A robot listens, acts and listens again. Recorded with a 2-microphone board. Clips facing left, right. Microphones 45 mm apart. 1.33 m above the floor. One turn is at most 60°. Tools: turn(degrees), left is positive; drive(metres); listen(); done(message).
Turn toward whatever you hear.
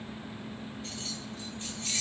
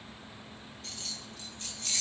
turn(degrees=25)
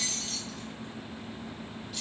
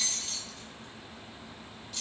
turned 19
done("Found it: keys jangling, straight ahead, under 1 m away.")